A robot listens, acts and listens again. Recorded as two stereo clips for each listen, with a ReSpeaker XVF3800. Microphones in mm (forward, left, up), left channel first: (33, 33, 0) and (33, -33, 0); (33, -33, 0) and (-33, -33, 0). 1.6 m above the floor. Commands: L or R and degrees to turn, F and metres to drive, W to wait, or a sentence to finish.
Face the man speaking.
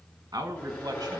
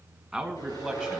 R90
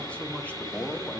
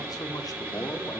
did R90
L25
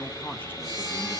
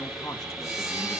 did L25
W
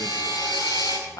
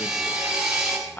L65
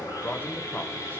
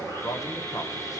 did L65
L25
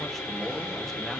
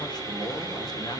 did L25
W
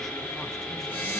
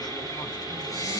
W
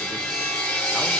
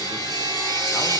I heard a man speaking from this way, but can't make it out now.